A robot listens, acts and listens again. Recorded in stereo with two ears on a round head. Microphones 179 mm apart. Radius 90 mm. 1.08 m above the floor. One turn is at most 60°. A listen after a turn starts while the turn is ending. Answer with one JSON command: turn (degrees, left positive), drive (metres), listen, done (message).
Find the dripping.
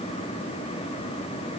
{"listen": true}
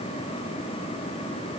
{"listen": true}
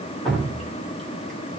{"turn": 30}
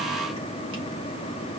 {"listen": true}
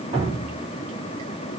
{"turn": -30}
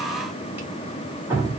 {"turn": -10}
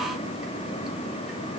{"listen": true}
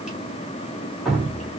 {"done": "Facing the dripping."}